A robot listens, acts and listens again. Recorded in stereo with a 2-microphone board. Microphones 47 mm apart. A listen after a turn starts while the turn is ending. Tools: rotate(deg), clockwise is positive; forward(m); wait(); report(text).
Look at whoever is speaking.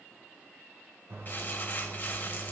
wait()
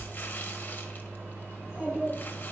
rotate(20)
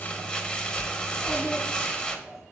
report("Found it: a child speaking, straight ahead.")